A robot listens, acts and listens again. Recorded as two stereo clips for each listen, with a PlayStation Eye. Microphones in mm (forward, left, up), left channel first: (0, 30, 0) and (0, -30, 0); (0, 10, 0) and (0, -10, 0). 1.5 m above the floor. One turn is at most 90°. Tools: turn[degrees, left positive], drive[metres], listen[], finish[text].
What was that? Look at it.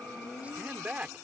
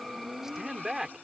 Thought: The man speaking: about 25° right or 155° right.
Action: turn[-25]
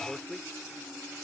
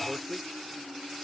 Action: finish[Found it: a man speaking, straight ahead.]